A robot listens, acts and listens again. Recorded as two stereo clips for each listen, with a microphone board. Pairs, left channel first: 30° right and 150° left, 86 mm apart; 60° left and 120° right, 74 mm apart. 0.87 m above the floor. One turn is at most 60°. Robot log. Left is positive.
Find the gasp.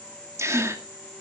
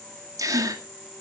note: The gasp: 155° right.
cmd yaw -60
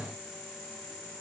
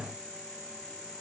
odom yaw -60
note: Nothing new. It was at 95° right.
cmd yaw -60
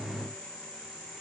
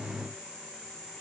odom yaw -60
note: Nothing new. It was at 35° right.
cmd yaw -35
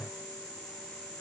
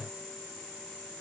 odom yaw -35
end: Facing where the gasp came from. I can't hear it now.